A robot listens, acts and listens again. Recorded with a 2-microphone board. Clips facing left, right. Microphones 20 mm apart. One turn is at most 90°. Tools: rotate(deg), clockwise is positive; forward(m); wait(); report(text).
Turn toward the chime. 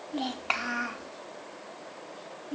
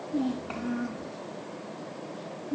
wait()
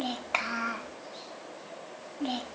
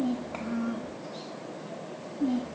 wait()
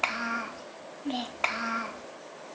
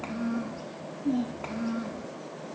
report("I can't make out a chime to turn to.")